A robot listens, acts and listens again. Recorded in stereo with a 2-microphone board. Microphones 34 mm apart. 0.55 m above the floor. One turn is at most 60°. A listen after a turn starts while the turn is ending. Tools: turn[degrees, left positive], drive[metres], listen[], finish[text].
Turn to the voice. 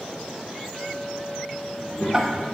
Thought: The child speaking: about 50° left or 130° left.
Action: turn[50]
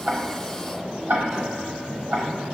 Thought: So it is at 15° right.
Action: turn[-15]
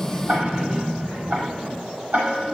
Thought: The child speaking is now 15° right.
Action: turn[-15]
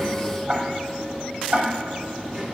Action: finish[Facing the child speaking.]